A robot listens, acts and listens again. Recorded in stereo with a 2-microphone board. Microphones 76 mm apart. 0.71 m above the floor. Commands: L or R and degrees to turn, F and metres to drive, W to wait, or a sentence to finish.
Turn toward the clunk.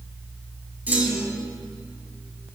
R25
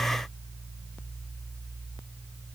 W
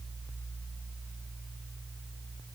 I heard a clunk, but can't make it out now. It was about straight ahead or 130° right.